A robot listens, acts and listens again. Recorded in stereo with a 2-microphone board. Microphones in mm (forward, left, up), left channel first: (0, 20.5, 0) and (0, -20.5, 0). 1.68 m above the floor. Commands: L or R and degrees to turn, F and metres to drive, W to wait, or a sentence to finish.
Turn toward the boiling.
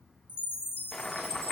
L30
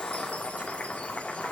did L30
L140
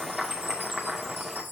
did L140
R10
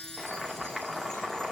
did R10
Found it: boiling, straight ahead, 2 to 4 m away.